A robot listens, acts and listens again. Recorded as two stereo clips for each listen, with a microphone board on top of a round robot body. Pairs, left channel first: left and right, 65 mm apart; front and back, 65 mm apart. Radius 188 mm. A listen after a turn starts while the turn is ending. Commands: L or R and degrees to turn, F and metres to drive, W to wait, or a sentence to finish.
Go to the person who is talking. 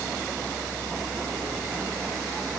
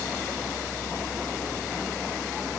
W
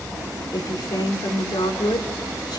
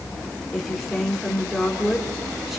L95
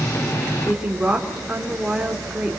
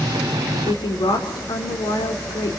R10
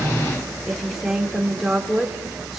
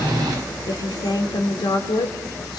F1.0
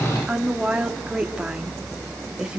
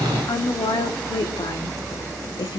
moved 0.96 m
R10
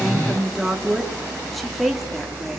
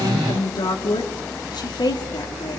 F1.0
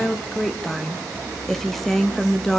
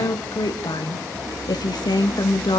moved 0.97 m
F1.0
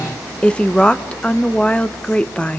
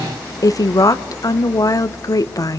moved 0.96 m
L20
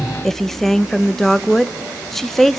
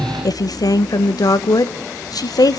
F1.0
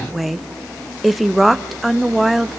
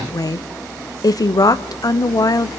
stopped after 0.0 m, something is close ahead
I am next to the woman speaking.